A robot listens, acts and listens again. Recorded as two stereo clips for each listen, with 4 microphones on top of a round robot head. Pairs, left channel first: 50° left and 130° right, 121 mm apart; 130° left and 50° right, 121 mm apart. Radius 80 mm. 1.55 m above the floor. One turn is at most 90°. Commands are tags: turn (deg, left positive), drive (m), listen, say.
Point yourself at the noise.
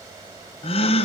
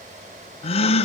<turn deg="90"/>
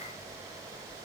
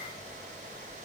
<say>I heard a gasp from this way, but can't make it out now.</say>